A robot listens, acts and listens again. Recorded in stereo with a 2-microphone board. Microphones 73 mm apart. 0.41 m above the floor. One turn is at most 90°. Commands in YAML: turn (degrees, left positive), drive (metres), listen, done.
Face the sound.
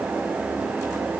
listen: true
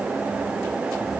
listen: true
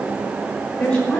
turn: 30
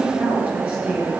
turn: -20
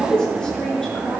done: "Facing the woman speaking, over 4 m away."